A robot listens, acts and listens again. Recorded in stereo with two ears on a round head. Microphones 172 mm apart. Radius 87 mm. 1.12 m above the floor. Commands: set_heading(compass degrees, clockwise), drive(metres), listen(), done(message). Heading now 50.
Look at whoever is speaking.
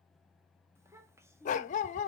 set_heading(65)
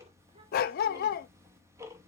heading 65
listen()
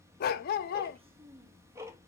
set_heading(215)
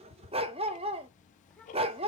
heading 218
done("Found it: a child speaking, straight ahead.")